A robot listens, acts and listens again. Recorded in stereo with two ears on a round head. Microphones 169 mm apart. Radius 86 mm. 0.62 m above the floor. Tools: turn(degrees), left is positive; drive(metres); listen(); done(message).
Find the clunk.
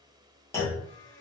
turn(degrees=30)
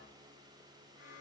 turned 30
listen()
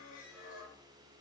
done("I heard a clunk, but can't make it out now. It was about 15° right or 135° left.")